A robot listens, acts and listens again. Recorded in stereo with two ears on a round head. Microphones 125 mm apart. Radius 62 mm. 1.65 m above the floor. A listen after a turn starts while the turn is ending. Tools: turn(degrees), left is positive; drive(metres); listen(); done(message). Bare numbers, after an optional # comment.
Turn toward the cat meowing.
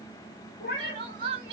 # The cat meowing: about 60° left or 120° left.
turn(60)
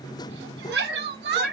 done("Found it: a cat meowing, straight ahead, 1 to 2 m away.")